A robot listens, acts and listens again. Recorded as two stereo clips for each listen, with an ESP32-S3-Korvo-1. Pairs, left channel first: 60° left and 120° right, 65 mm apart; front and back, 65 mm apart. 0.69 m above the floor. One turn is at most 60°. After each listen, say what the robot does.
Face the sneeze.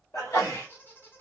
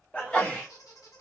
Turn 60° left.
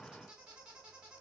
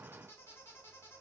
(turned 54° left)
Turn 15° left.
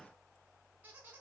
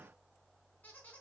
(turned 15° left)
I heard a sneeze from this way, but can't make it out now.